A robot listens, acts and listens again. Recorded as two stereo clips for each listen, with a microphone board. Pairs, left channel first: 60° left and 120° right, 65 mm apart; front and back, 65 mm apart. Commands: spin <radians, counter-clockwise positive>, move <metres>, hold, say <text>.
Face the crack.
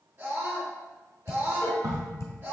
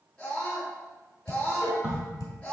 spin -2.01
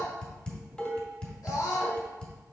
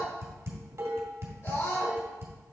say I heard a crack from this way, but can't make it out now.